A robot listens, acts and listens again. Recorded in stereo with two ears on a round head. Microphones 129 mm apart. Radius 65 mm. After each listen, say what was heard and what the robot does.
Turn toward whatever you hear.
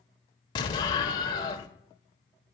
The explosion: about 30° left or 150° left. Turn 30° left.
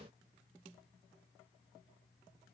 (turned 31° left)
Keep listening.
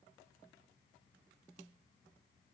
I heard an explosion, but can't make it out now. It was about straight ahead or 115° left.